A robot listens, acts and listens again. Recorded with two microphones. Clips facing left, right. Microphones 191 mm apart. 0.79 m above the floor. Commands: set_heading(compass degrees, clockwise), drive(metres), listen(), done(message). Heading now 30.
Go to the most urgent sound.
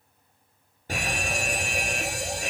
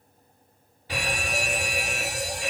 set_heading(345)
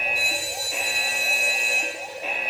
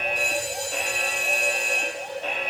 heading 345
set_heading(335)
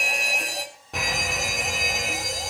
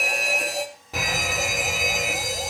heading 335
drive(1.0)
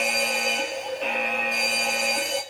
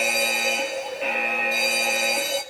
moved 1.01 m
drive(1.0)
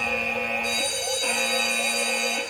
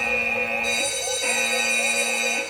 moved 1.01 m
drive(1.0)
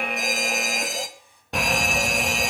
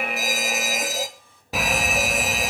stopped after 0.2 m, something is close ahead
done("Arrived at the fire alarm, straight ahead.")